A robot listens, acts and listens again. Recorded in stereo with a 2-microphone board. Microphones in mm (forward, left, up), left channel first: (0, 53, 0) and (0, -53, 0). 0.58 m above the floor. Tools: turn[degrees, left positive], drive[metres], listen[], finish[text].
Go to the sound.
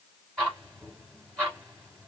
Action: turn[30]
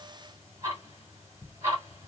Thought: So it is at 20° right.
Action: turn[-20]
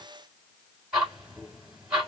Action: drive[1.0]
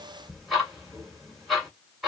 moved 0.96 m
Action: drive[1.0]
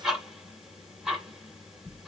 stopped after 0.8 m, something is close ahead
Action: finish[I am next to the ticking.]